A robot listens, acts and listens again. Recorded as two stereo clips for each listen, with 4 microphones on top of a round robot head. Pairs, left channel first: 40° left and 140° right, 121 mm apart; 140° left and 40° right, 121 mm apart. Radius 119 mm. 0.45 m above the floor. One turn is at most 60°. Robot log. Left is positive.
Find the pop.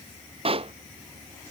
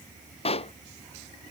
note: The pop: straight behind.
cmd yaw +60
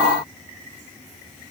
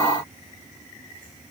note: Nothing new. It was at 120° left.
cmd yaw +60
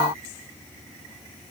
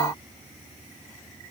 note: Nothing new. It was at 60° left.
cmd yaw +60
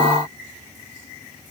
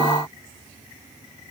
end: Facing where the pop came from. I can't hear it now.